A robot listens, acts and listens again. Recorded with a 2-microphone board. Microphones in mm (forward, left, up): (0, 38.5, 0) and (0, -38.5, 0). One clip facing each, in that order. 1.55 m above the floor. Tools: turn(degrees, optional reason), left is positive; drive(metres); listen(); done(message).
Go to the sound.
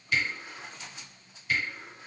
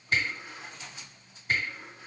turn(degrees=-45, reason="The camera shutter: about 45° right or 135° right.")
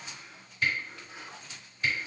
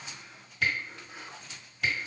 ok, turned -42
turn(degrees=-95, reason="So it is at 95° right.")
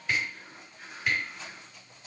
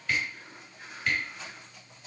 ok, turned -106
turn(degrees=10, reason="The camera shutter is now 10° left.")
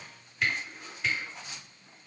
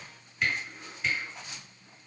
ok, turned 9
drive(metres=1.0)
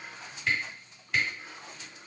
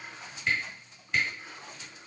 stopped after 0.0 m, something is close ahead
done("Something is in my way. I am facing the camera shutter but have not reached it.")